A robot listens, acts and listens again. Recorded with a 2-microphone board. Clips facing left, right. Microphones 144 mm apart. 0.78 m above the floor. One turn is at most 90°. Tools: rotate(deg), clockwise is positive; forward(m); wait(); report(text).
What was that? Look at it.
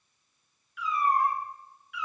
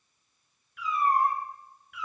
rotate(55)
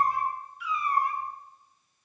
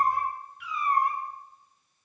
rotate(50)
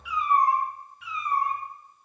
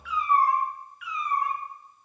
rotate(-35)
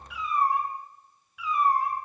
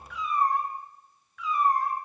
rotate(-10)
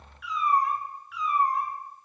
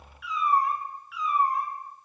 report("Found it: a cat meowing, straight ahead, 1 to 2 m away.")